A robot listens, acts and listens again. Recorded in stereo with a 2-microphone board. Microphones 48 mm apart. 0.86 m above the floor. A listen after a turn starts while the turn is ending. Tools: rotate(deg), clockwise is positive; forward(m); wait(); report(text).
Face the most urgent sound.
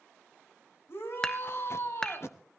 rotate(-55)
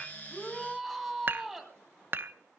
report("Facing the shout.")